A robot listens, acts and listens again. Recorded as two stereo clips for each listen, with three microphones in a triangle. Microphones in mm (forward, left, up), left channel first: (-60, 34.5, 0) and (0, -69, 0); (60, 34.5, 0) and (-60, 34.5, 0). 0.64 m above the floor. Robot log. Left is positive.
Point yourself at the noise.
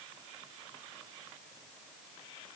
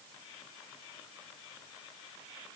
cmd idle
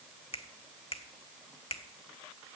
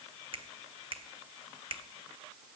note: The finger snap: 145° left.
cmd yaw +145
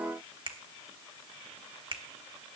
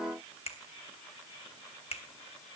note: The finger snap is now 20° right.
cmd yaw -20
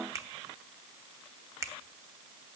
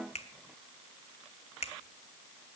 end: Facing the finger snap.